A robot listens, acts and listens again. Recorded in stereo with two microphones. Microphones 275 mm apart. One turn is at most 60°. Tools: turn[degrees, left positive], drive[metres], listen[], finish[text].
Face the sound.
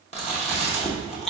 Thought: The chewing: about 20° left or 160° left.
Action: turn[20]
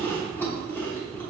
Thought: So it is at 10° left.
Action: turn[10]
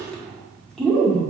Action: finish[Facing the chewing.]